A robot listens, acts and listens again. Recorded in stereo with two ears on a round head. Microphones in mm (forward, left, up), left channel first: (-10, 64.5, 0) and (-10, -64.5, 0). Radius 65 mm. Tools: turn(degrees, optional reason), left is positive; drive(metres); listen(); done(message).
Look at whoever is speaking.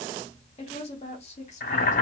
turn(degrees=50, reason="The woman speaking: about 50° left or 130° left.")
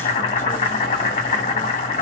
listen()
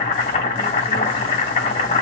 listen()
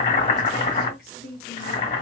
turn(degrees=65, reason="So it is at 65° left.")
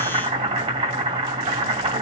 listen()
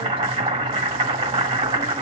listen()
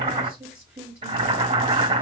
turn(degrees=-15, reason="The woman speaking is now 15° right.")
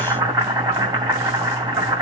listen()
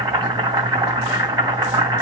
listen()
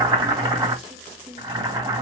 done("Found it: a woman speaking, straight ahead, 1 to 2 m away.")